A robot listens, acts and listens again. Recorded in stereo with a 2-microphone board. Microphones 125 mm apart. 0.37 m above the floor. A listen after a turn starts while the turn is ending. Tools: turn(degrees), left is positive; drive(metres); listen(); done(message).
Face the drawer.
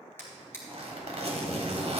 turn(degrees=15)
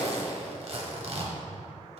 listen()
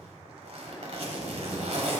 listen()
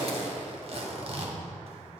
done("I heard a drawer, but can't make it out now. It was about straight ahead or 150° left.")